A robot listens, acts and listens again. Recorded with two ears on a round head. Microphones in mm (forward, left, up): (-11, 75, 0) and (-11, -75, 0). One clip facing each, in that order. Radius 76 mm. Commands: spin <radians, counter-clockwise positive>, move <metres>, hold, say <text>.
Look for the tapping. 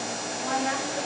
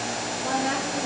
hold
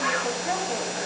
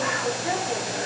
hold
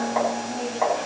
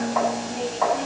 spin 0.52
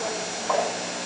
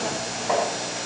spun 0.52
hold
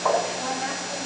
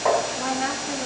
spin -0.35
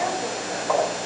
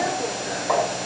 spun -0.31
say Found it: tapping, straight ahead.